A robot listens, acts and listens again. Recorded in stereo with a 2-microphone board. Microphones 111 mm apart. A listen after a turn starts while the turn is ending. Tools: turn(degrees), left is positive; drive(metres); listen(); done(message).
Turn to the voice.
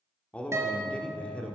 turn(degrees=30)
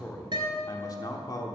turn(degrees=135)
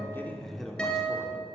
done("Found it: a man speaking, straight ahead.")